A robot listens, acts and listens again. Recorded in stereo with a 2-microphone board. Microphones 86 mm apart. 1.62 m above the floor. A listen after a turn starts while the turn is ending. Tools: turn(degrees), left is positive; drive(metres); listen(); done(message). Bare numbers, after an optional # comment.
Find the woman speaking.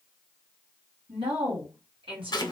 turn(-90)
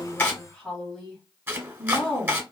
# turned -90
# So it is at 10° left.
turn(10)
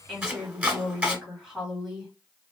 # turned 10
done("Facing the woman speaking.")